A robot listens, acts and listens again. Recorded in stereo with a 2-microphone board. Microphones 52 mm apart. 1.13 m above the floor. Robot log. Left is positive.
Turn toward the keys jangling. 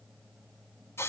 cmd idle
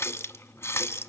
cmd idle
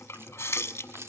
note: The keys jangling: about 60° right or 120° right.
cmd yaw -60
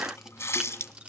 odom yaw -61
cmd idle
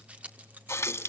note: So it is at 30° right.
cmd yaw -30
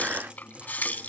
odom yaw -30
cmd idle
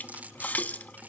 note: The keys jangling is now 30° right.
cmd yaw -30
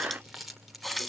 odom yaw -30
end: Facing the keys jangling, 2 to 4 m away.